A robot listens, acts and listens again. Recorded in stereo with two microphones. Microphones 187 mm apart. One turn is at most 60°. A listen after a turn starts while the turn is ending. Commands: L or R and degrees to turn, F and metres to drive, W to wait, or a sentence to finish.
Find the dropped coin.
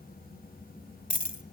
L45
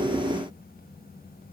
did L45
W
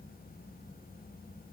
I heard a dropped coin, but can't make it out now. It was about straight ahead or 90° left.